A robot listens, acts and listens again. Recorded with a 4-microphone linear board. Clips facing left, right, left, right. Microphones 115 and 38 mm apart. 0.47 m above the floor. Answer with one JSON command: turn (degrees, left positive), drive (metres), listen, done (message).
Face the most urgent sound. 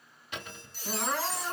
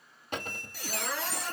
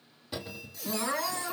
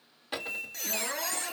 {"turn": 55}
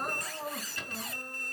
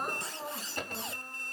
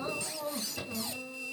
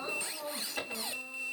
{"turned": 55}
{"done": "Facing the crying, 2 to 4 m away."}